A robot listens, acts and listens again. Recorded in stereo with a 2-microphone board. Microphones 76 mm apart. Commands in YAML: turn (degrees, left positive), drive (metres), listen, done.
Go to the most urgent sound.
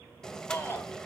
turn: 25
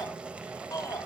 turn: 130
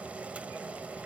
listen: true
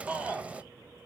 turn: -15
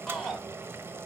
drive: 1.0
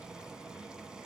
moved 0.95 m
listen: true
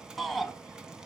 drive: 1.0
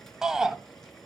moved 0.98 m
drive: 1.0
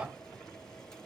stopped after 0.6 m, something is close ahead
turn: -20
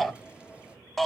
done: "I am next to the shout."